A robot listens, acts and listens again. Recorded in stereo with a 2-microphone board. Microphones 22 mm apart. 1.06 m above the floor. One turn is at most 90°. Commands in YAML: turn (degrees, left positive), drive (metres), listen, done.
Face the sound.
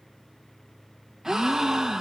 turn: -25
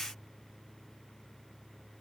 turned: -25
listen: true
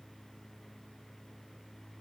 done: "I heard a gasp, but can't make it out now. It was about straight ahead or 130° right."